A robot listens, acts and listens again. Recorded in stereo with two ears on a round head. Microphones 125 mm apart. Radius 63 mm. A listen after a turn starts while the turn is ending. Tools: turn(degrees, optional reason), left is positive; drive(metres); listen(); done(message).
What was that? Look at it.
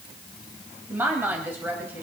turn(degrees=-30)
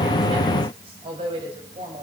turn(degrees=-135, reason="So it is at 135° right.")
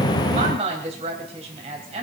turn(degrees=-45, reason="The woman speaking is now 45° right.")
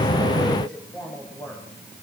turn(degrees=10, reason="The woman speaking is now 10° left.")
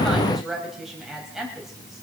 done("Found it: a woman speaking, straight ahead.")